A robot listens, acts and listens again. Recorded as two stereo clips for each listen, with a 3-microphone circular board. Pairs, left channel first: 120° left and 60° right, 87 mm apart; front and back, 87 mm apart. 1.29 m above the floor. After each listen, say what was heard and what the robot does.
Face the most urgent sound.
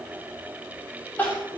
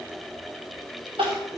The crying: 165° right. Turn 165° right.
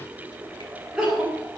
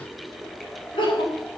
The crying is now 25° left. Turn 25° left.
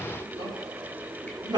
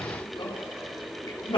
The crying is now 20° right. Turn 20° right.
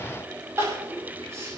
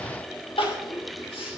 Found it: crying, straight ahead.